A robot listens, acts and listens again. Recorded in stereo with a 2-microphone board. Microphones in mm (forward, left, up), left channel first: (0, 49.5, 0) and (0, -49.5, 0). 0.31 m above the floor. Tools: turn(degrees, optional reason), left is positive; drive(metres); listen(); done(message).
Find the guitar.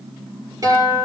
turn(degrees=-40, reason="The guitar: about 40° right or 140° right.")
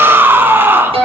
turn(degrees=-100, reason="So it is at 100° right.")
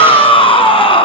listen()
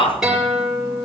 done("Facing the guitar, over 4 m away.")